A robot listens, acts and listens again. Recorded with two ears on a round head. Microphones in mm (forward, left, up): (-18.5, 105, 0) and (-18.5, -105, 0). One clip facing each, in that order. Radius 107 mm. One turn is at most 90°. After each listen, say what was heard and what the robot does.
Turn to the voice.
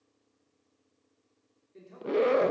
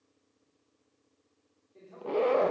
The man speaking: about 35° left or 145° left. Turn 35° left.
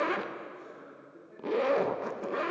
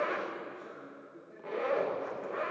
Facing the man speaking, 2 to 4 m away.